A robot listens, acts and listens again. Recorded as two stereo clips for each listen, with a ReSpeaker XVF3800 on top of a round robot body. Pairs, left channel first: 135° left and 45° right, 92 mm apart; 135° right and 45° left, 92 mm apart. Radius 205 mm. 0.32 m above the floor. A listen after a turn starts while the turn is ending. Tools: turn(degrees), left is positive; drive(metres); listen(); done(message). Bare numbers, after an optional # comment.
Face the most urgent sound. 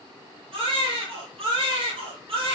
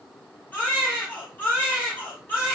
# The baby crying: 65° right.
turn(-65)
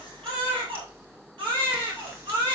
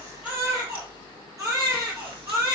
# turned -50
# The baby crying is now 15° right.
turn(-15)
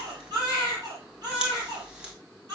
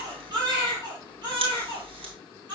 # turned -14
done("Found it: a baby crying, straight ahead.")